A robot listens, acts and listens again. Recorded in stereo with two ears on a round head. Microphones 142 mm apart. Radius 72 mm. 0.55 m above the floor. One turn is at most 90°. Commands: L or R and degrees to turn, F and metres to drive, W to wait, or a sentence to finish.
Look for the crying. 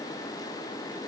W
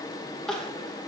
L30
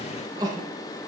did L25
R25
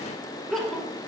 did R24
Found it: crying, straight ahead.